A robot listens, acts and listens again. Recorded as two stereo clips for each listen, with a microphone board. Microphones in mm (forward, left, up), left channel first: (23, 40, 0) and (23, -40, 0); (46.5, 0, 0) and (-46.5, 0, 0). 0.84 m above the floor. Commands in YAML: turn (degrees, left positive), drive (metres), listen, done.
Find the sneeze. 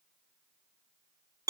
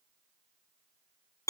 listen: true
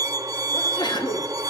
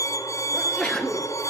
turn: 80
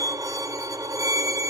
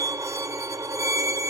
done: "Facing where the sneeze came from. I can't hear it now."